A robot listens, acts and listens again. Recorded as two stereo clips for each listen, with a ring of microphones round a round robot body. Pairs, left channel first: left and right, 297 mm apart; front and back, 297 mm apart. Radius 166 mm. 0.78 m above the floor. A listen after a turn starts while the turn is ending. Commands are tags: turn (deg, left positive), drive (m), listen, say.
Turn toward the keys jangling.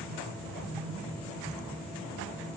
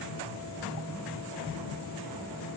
<listen/>
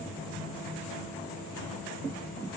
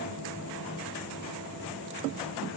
<listen/>
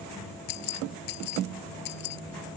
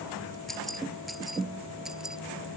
<turn deg="90"/>
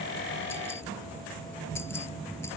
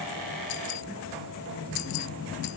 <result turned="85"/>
<listen/>
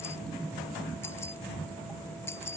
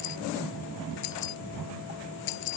<say>Facing the keys jangling.</say>